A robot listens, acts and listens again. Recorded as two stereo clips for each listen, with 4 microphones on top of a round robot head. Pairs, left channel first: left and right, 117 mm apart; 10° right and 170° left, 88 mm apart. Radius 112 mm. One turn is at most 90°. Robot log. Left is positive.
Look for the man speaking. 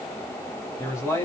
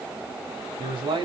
note: The man speaking: 155° left.
cmd yaw +90
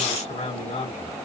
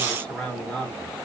note: The man speaking is now 75° left.
cmd yaw +75
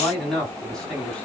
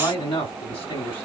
end: Facing the man speaking, over 4 m away.